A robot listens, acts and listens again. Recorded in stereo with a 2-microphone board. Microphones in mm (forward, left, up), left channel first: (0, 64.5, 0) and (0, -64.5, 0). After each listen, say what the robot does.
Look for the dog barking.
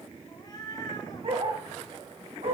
Turn 55° right.
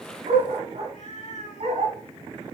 Turn 55° right.
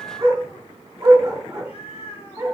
Turn 25° right.
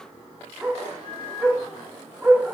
Turn 10° right.
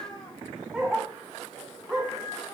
Found it: a dog barking, straight ahead, over 4 m away.